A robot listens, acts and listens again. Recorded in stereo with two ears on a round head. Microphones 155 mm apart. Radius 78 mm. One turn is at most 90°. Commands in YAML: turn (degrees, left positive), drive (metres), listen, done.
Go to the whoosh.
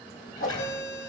turn: 50
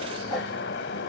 drive: 1.0
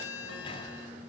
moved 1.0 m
listen: true
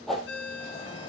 drive: 1.0
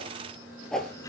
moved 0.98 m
drive: 1.0
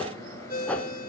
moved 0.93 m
turn: 10
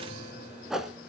drive: 1.0
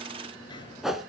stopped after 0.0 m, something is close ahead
done: "Arrived at the whoosh, straight ahead."